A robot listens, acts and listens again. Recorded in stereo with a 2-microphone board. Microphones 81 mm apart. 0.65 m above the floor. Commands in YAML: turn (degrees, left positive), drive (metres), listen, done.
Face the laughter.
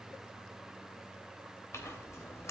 listen: true
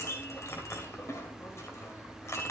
listen: true
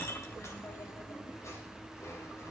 done: "I can't make out laughter to turn to."